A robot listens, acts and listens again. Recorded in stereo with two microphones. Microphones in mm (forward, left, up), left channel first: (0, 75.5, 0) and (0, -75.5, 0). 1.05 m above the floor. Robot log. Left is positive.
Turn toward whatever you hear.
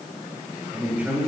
cmd yaw -30
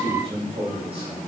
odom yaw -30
note: So it is at 140° right.
cmd yaw -140
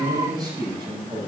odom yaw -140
note: The man speaking is now 30° right.
cmd yaw -30
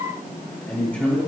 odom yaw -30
note: The man speaking is now 10° left.
cmd yaw +10
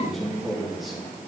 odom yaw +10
end: Found it: a man speaking, straight ahead.